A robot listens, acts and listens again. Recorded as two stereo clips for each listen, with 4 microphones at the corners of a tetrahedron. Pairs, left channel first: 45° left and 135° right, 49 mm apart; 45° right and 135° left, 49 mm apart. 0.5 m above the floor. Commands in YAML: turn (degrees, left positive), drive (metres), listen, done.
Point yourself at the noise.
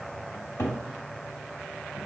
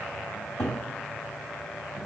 turn: 20
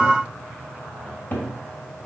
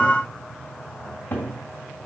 done: "Facing the cupboard door."